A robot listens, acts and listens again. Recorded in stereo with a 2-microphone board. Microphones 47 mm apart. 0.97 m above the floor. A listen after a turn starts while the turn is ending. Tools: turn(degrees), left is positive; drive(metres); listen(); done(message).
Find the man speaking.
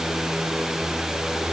listen()
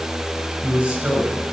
turn(degrees=-25)
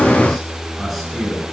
done("Facing the man speaking.")